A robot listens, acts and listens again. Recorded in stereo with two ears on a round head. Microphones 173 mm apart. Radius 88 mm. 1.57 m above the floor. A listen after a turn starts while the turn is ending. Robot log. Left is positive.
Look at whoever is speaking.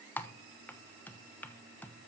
cmd idle
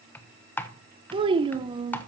note: The child speaking: about 25° right or 155° right.
cmd yaw -25
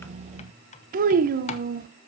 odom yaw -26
note: So it is at 125° right.
cmd yaw -125
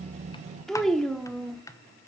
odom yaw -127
end: Facing the child speaking.